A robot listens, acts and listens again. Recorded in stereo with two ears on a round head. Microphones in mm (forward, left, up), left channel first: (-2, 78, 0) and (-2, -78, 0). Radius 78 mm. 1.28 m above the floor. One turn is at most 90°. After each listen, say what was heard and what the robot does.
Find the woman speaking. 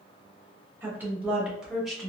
Turn 30° left.
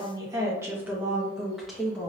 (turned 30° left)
Turn 30° left.
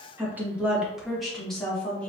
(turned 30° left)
Turn 30° left.
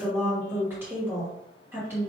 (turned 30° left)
So it is at 15° right. Turn 15° right.
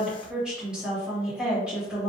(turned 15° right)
Facing the woman speaking.